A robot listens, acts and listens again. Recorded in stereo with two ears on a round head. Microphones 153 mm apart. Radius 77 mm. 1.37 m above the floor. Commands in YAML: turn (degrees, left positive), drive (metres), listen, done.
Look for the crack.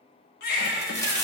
turn: 15
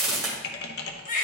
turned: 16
done: "Found it: a crack, straight ahead, 1 to 2 m away."